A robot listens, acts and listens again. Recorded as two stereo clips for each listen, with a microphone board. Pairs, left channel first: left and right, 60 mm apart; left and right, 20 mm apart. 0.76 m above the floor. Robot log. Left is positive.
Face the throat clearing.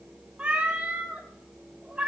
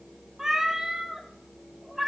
cmd idle
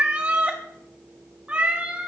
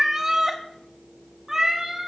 cmd idle
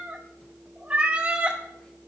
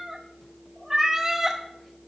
end: I can't make out throat clearing, only a cat meowing.